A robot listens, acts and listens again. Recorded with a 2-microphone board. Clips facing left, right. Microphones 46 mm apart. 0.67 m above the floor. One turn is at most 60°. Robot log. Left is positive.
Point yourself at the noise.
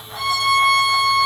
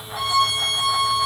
note: The violin: about 15° right or 165° right.
cmd yaw -15
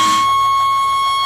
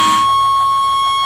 note: So it is at 150° right.
cmd yaw -60
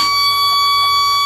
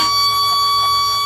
note: The violin is now 95° right.
cmd yaw -60
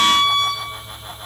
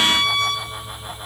note: The violin is now 65° right.
cmd yaw -60
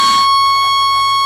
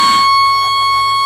note: The violin is now 15° right.
cmd yaw -15
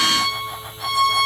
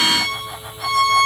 end: Found it: a violin, straight ahead, 1 to 2 m away.